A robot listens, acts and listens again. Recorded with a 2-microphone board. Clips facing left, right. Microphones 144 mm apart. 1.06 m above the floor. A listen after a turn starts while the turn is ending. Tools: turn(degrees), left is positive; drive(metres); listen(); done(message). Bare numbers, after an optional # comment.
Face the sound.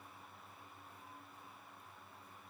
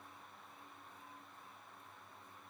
listen()
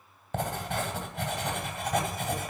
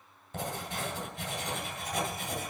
# The writing: about 70° left or 110° left.
turn(70)
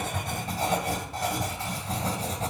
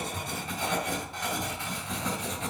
# So it is at 40° left.
turn(40)
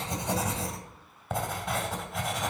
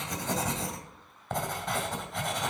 done("Found it: writing, straight ahead.")